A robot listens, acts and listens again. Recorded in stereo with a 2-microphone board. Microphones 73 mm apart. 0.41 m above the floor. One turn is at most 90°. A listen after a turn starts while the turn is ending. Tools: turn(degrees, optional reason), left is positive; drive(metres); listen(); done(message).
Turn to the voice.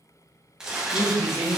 turn(degrees=45, reason="The man speaking: about 45° left or 135° left.")
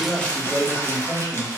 turn(degrees=80, reason="So it is at 80° left.")
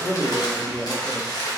turn(degrees=15, reason="The man speaking is now 15° left.")
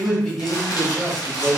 done("Found it: a man speaking, straight ahead, 1 to 2 m away.")